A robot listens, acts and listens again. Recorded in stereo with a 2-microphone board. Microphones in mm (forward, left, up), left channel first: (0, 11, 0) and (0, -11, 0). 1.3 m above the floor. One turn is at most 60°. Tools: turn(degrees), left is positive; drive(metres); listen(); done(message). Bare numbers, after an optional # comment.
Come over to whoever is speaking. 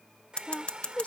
# The woman speaking: about 70° left or 110° left.
turn(60)
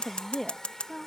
# So it is at 15° left.
turn(15)
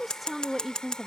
drive(1.0)
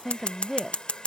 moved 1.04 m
# The woman speaking is now 15° right.
turn(-15)
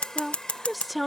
drive(1.0)
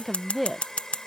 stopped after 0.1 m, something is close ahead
done("I am next to the woman speaking.")